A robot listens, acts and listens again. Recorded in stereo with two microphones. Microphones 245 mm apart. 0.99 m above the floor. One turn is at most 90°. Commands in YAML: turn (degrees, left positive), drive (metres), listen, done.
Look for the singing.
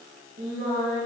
turn: -45
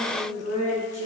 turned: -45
turn: -85
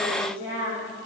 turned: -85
turn: -10
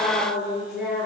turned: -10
done: "Found it: singing, straight ahead, over 4 m away."